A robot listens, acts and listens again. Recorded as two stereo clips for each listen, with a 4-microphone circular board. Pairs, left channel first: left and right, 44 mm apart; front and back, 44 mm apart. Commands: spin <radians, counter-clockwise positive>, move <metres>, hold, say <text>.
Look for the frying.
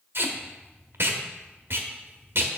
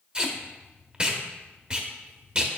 hold
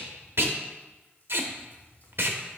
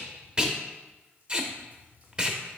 hold
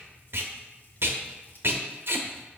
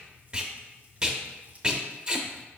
say I can't make out frying, only tape being pulled.